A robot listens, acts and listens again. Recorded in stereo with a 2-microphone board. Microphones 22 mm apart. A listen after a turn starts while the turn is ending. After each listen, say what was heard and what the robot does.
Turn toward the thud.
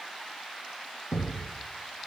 The thud: about 70° left or 110° left. Turn 70° left.
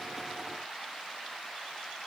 Keep listening.
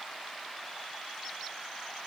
I heard a thud, but can't make it out now. It was about straight ahead or 40° left.